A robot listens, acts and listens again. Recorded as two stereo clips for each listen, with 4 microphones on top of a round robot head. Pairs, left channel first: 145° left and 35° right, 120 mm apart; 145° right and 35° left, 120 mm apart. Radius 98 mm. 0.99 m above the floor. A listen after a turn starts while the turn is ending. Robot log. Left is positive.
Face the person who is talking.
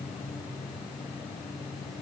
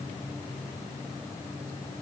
cmd idle
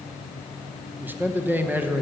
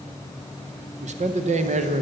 note: The man speaking: 40° left.
cmd yaw +40
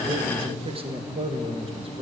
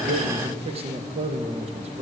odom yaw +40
end: Found it: a man speaking, straight ahead.